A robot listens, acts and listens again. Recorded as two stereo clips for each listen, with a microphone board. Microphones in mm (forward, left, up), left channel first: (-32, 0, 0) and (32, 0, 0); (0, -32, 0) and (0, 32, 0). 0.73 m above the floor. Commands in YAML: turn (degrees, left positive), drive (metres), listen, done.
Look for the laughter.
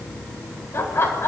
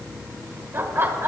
turn: 140
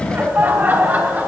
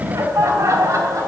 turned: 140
turn: 60
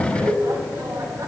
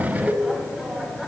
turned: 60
done: "Facing the laughter."